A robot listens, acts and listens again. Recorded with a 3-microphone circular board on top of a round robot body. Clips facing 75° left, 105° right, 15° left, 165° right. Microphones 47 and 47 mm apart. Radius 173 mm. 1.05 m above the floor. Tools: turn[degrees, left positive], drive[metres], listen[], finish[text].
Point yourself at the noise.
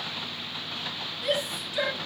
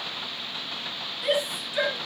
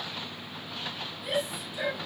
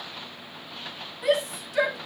Thought: The shout: 175° right.
Action: turn[-175]
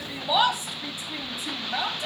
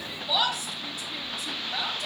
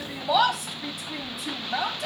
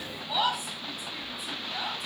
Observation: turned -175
Thought: The shout is now 10° left.
Action: turn[10]
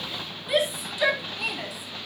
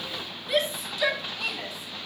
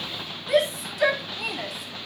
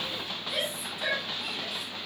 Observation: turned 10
Action: finish[Facing the shout, 2 to 4 m away.]